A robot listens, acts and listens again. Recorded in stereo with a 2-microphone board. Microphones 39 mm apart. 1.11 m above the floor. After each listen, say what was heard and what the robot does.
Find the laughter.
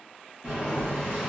Keep listening.
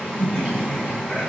Turn 30° right.
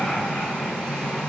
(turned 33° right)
So it is at 15° left. Turn 15° left.
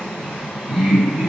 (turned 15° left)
The laughter is now 25° right. Turn 25° right.
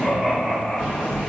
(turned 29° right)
Facing the laughter, 1 to 2 m away.